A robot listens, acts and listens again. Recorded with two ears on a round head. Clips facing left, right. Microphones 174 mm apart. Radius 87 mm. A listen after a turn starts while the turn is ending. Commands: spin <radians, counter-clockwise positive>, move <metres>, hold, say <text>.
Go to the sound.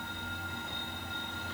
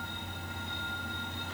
hold
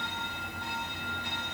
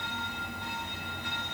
hold
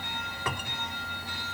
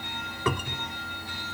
spin -1.57
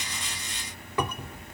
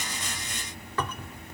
spin 0.26
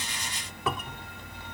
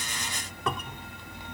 move 1.0
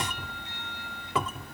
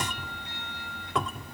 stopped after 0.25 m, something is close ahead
say Blocked. The cupboard door is further on, straight ahead.